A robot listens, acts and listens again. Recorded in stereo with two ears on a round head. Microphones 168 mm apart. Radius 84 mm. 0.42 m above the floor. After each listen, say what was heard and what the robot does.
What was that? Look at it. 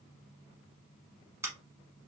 Turn 30° right.
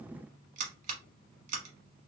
So it is at 135° right. Turn 135° right.
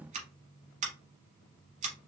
The scissors is now 40° right. Turn 40° right.
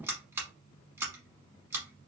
The scissors is now 15° right. Turn 15° right.
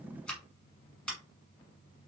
Found it: scissors, straight ahead.